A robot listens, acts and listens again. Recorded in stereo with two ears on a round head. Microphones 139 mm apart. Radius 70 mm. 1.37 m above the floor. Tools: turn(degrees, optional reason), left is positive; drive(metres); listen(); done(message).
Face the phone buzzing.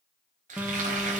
turn(degrees=-30)
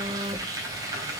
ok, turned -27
turn(degrees=-140, reason="So it is at 140° right.")
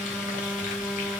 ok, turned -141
done("Facing the phone buzzing, under 1 m away.")